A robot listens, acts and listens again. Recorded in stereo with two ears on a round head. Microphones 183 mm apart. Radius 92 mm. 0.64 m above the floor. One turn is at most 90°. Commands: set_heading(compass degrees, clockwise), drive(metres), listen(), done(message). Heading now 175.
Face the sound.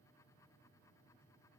listen()
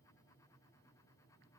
listen()
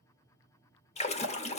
set_heading(140)
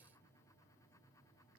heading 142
listen()
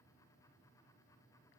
done("I heard a splash, but can't make it out now. It was about straight ahead or 115° left.")